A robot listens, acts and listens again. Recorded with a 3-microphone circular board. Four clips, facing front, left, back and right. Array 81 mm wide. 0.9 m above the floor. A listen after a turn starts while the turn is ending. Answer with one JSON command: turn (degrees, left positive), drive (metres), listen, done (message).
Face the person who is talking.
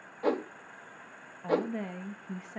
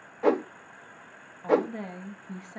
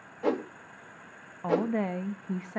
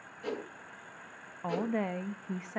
{"turn": -155}
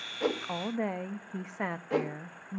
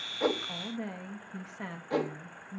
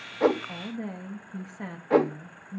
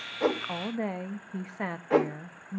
{"turn": -35}
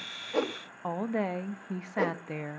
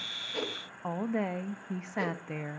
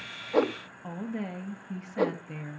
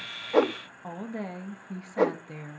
{"turn": 20}
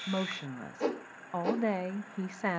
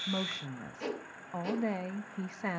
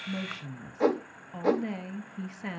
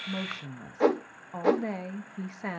{"done": "Facing the woman speaking, under 1 m away."}